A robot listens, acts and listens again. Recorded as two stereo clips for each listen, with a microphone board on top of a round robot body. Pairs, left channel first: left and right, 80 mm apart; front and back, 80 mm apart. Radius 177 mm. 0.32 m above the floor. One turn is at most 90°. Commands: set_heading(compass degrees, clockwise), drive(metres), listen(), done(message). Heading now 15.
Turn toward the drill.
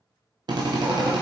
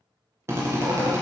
set_heading(105)
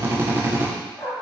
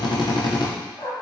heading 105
set_heading(135)
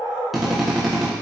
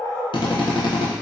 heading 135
done("Found it: a drill, straight ahead.")